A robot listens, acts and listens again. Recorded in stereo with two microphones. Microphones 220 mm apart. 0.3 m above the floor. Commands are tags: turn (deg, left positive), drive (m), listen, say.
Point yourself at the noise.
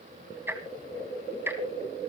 <turn deg="-30"/>
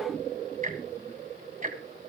<turn deg="-140"/>
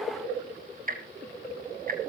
<turn deg="-50"/>
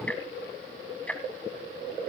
<say>Found it: ticking, straight ahead, 1 to 2 m away.</say>